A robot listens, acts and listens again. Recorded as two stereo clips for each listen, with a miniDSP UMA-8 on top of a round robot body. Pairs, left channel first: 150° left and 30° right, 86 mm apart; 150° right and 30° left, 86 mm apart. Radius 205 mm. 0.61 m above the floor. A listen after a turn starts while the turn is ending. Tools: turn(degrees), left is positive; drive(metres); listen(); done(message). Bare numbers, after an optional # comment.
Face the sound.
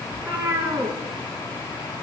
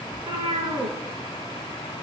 # The cat meowing: 35° left.
turn(35)
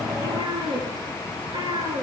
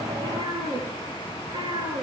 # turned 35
done("Facing the cat meowing.")